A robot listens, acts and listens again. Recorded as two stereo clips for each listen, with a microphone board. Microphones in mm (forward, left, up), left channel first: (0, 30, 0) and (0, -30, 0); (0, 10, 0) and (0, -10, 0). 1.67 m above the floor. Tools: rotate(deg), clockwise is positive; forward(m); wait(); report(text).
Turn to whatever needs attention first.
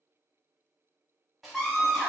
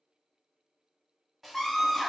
rotate(-30)
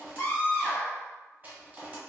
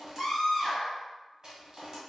rotate(-150)
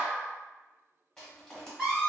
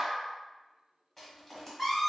rotate(10)
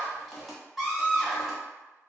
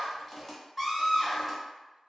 report("Facing the scream, 1 to 2 m away.")